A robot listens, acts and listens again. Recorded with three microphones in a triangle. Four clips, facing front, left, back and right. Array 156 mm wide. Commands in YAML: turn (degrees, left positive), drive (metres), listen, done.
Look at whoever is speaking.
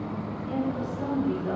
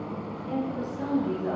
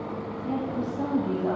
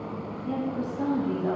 turn: -150
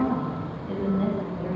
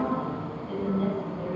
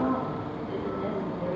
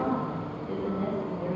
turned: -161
turn: 10
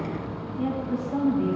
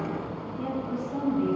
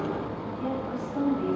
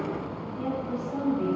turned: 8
done: "Facing the woman speaking."